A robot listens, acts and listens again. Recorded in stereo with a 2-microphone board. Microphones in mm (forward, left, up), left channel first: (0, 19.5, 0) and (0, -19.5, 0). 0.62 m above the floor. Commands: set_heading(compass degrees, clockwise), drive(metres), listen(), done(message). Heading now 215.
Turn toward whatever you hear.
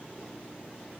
listen()
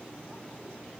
listen()
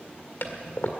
set_heading(150)
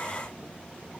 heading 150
listen()
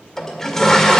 set_heading(140)
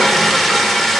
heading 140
done("Facing the toilet flushing.")